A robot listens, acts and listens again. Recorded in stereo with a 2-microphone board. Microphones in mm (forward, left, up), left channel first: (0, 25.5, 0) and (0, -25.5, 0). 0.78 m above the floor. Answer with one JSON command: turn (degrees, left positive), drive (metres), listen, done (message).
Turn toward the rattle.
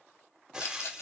{"turn": 65}
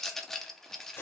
{"turn": 10}
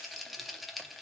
{"done": "Found it: a rattle, straight ahead."}